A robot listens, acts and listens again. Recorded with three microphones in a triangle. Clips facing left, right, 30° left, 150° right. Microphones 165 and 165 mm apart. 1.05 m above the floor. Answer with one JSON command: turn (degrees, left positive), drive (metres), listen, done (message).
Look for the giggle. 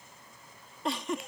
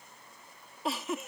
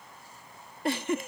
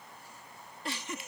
{"done": "Found it: a giggle, straight ahead."}